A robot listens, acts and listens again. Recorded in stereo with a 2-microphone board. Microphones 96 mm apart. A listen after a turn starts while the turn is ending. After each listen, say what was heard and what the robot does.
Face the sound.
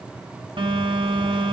The phone buzzing: about 60° right or 120° right. Turn 60° right.
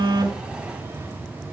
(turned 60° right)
So it is at 25° right. Turn 25° right.
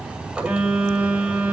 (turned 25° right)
The phone buzzing is now 10° right. Turn 10° right.
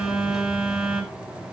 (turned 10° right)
Found it: a phone buzzing, straight ahead.